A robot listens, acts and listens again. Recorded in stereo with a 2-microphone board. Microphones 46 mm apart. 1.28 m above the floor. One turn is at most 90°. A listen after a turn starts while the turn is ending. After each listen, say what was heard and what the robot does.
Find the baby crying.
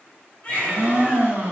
The baby crying: about 25° left or 155° left. Turn 25° left.
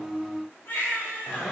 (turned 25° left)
So it is at 135° left. Turn 90° left.
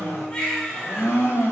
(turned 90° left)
The baby crying is now 10° left. Turn 10° left.
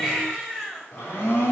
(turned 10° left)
Found it: a baby crying, straight ahead.